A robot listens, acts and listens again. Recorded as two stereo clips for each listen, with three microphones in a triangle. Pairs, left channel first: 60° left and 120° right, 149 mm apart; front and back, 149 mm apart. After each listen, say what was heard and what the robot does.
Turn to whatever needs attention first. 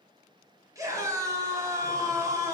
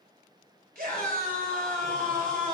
The scream: 170° left. Turn 170° left.
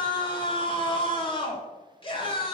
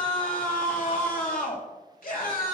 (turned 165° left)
Facing the scream.